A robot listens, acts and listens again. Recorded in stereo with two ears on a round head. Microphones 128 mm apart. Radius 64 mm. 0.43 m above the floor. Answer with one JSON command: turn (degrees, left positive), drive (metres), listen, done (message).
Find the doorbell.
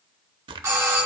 {"turn": -20}
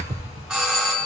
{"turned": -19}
{"done": "Facing the doorbell, 2 to 4 m away."}